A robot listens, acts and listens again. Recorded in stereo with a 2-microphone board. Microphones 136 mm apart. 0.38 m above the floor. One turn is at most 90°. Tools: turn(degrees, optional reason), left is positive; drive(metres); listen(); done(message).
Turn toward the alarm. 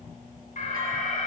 turn(degrees=70, reason="The alarm: about 70° left or 110° left.")
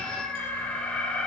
turn(degrees=10, reason="So it is at 10° left.")
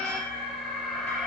done("Facing the alarm, 2 to 4 m away.")